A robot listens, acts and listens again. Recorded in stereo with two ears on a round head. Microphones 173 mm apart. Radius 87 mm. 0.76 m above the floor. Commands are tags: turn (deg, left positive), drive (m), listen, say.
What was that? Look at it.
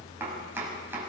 <turn deg="-30"/>
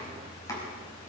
<listen/>
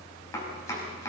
<turn deg="15"/>
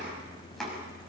<say>Facing the chopping, over 4 m away.</say>